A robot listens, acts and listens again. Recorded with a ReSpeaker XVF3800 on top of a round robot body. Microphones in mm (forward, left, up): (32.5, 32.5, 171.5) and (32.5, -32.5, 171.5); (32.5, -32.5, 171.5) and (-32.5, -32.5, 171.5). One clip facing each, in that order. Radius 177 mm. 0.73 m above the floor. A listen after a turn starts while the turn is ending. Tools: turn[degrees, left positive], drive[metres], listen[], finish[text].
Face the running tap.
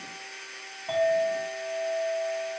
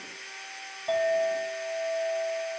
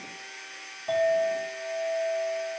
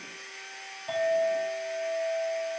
Action: listen[]
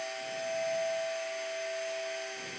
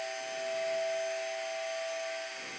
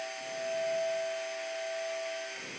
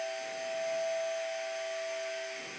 Action: listen[]
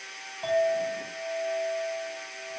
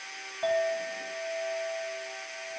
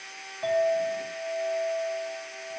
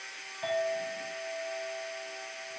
Action: finish[I can't make out a running tap, only a clink.]